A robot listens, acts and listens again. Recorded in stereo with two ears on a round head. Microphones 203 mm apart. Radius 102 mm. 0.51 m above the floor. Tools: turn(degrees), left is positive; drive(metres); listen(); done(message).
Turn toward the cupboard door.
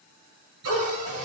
turn(degrees=-75)
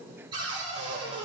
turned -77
turn(degrees=-20)
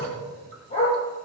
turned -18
listen()
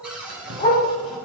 done("Found it: a cupboard door, straight ahead.")